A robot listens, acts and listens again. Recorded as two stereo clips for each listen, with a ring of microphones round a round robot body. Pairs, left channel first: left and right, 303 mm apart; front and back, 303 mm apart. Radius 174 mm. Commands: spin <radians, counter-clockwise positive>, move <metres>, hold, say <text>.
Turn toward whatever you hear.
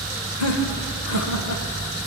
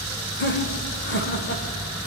spin 0.96
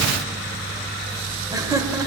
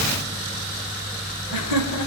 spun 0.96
spin -0.17
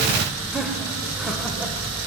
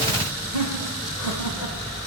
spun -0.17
say Facing the laughter.